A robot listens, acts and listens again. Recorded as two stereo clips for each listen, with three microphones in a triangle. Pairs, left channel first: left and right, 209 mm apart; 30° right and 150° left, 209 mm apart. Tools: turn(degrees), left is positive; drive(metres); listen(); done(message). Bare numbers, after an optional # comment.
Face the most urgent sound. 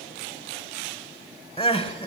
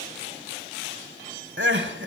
# The crying: 145° left.
turn(145)
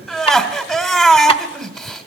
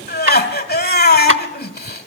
done("Facing the crying, 1 to 2 m away.")